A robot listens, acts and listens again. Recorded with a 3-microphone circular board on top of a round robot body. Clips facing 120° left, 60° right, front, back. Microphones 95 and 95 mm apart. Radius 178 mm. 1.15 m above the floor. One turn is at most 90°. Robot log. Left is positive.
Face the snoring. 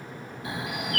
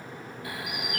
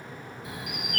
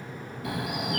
note: The snoring: 175° right.
cmd yaw -90
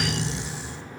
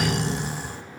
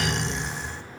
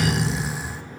note: The snoring is now 95° right.
cmd yaw -90
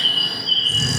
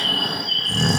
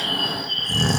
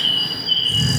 note: The snoring is now 25° right.
cmd yaw -25
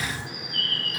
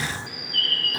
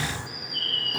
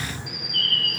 end: Facing the snoring, 1 to 2 m away.